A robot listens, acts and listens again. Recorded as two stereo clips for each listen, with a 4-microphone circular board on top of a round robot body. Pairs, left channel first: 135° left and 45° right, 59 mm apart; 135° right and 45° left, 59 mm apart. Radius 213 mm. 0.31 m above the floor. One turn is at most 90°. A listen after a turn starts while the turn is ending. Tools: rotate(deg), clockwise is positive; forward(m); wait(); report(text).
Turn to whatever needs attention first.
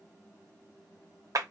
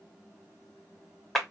wait()
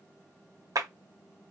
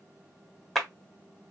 wait()
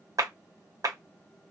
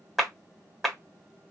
report("I can't make out anything urgent to turn to.")